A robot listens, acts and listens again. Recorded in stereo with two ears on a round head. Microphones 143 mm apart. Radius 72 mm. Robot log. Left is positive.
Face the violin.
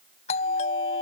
cmd idle
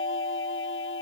cmd idle
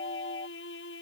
cmd yaw +90
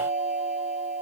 cmd idle
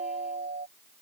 cmd idle
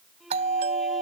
end: Facing the violin.